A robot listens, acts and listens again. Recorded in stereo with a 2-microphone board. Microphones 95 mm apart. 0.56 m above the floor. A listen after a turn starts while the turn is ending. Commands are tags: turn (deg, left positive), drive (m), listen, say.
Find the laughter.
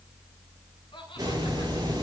<turn deg="65"/>
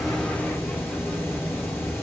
<listen/>
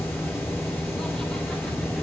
<listen/>
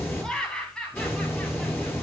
<turn deg="10"/>
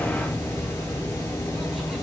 <listen/>
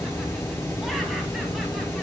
<listen/>
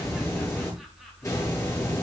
<say>I heard laughter from this way, but can't make it out now.</say>